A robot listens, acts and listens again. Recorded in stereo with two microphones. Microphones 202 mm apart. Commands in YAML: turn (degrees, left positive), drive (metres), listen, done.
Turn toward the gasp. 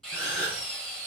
turn: 90
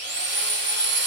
done: "Facing where the gasp came from. I can't hear it now."